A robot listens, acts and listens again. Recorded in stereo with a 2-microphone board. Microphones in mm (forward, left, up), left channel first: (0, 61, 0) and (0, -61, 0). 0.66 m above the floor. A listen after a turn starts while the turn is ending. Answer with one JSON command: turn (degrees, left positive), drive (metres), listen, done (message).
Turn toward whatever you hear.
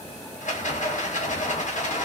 {"turn": 90}
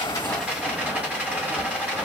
{"turn": -10}
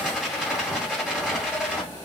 {"done": "Found it: a rattle, straight ahead."}